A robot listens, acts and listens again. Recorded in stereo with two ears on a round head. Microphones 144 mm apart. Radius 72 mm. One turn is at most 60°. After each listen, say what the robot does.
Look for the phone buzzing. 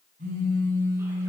Turn 50° right.
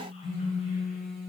Facing the phone buzzing.